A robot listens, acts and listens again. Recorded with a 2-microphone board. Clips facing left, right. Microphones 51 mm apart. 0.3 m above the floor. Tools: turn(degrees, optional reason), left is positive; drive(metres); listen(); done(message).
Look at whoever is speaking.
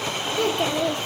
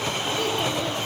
turn(degrees=65, reason="The child speaking: about 65° left or 115° left.")
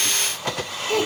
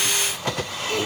done("Found it: a child speaking, straight ahead.")